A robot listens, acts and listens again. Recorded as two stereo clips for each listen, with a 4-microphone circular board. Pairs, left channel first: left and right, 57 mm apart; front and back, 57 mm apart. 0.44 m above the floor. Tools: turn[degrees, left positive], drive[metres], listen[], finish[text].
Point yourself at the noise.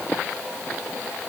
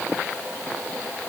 Action: listen[]
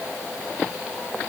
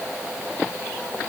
Action: listen[]
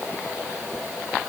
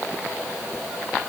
Action: finish[I can't make out anything to turn to.]